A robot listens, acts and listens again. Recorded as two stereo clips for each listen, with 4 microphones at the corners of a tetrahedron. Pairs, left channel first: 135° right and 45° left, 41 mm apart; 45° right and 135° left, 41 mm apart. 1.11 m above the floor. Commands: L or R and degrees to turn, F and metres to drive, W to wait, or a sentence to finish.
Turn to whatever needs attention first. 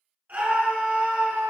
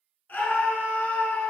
Facing the scream, 1 to 2 m away.